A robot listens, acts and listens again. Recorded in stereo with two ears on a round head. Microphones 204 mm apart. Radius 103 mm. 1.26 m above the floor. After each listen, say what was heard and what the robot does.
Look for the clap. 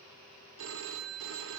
Keep listening.
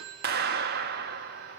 The clap: about 45° right or 135° right. Turn 45° right.
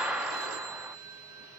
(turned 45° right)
Facing the clap.